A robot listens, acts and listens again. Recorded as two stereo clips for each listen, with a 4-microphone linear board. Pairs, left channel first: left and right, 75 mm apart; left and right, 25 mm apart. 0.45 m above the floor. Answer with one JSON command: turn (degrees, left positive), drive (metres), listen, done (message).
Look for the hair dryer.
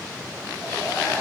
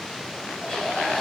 {"turn": 40}
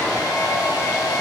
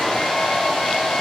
{"turn": 95}
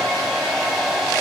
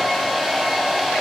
{"done": "Facing the hair dryer."}